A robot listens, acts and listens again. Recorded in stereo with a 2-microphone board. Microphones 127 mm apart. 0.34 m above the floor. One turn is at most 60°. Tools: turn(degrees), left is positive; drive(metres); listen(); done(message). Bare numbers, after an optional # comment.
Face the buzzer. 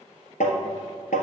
listen()
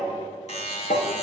# The buzzer: about 60° left or 120° left.
turn(60)
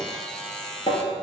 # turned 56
done("Facing the buzzer.")